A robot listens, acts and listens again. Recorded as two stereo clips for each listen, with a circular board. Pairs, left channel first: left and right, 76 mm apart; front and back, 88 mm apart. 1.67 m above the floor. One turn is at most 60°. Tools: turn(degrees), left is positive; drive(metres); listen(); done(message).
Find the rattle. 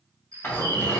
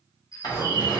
turn(degrees=25)
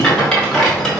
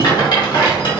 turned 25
done("Found it: a rattle, straight ahead.")